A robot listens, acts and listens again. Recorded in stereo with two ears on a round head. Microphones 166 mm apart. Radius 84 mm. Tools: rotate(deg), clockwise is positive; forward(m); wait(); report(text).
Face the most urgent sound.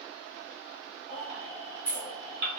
rotate(40)
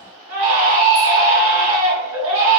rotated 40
rotate(100)
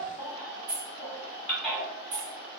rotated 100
report("Found it: a baby crying, straight ahead, 1 to 2 m away.")